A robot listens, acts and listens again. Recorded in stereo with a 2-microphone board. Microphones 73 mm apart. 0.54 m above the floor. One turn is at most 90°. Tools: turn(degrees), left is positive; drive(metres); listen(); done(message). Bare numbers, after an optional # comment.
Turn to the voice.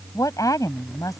# The woman speaking: about 55° left or 125° left.
turn(55)
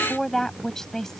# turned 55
done("Facing the woman speaking.")